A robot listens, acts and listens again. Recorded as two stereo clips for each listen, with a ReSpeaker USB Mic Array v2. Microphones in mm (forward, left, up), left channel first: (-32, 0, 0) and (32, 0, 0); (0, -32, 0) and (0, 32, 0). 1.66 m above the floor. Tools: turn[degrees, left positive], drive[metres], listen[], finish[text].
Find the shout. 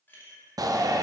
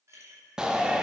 Thought: The shout: 10° left.
Action: turn[10]
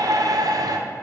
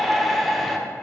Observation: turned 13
Action: finish[Facing the shout, under 1 m away.]